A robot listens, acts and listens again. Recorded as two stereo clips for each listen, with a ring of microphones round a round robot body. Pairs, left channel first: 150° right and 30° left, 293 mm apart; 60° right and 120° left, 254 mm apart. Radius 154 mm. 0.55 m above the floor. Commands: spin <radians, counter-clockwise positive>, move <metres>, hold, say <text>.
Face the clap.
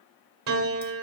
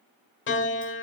hold
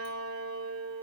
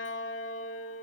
hold
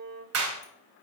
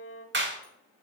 spin 1.31
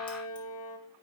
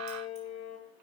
hold
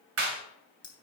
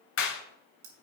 spin -0.26
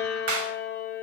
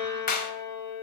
say Facing the clap.